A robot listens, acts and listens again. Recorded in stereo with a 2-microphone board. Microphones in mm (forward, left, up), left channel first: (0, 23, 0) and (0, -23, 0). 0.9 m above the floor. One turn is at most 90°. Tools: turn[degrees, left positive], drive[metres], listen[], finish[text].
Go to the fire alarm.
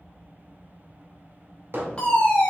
Thought: The fire alarm: about 25° left or 155° left.
Action: turn[25]
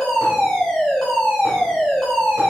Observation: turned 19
Thought: So it is at 10° left.
Action: turn[10]
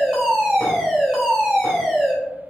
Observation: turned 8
Action: drive[1.0]
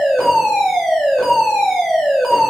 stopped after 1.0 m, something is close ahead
Action: finish[I am next to the fire alarm.]